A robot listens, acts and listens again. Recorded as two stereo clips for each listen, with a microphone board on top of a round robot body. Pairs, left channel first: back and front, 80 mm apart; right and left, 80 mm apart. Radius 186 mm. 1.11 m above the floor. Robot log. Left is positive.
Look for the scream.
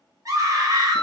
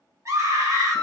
note: The scream: 40° left.
cmd yaw +40
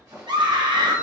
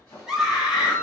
end: Found it: a scream, straight ahead, 1 to 2 m away.